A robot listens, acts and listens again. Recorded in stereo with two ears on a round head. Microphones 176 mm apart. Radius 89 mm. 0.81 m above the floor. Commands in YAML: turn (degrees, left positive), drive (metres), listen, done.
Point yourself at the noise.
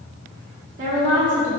turn: -70
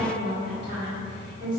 turn: -30
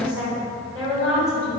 done: "Found it: a woman speaking, straight ahead, over 4 m away."